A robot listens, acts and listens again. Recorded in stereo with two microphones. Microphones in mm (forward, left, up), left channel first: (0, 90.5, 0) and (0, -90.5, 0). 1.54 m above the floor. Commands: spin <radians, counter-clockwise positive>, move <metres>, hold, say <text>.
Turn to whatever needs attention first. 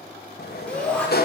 spin 0.52
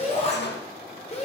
spin 2.44
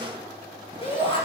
spin 0.52
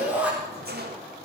spin -0.17
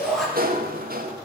say Found it: a shout, straight ahead.